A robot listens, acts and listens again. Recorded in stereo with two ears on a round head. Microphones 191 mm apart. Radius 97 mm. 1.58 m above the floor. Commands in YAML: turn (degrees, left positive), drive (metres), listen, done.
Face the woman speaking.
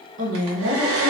turn: -65
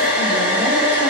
listen: true
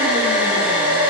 listen: true
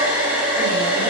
done: "I heard a woman speaking, but can't make it out now. It was about straight ahead or 50° right."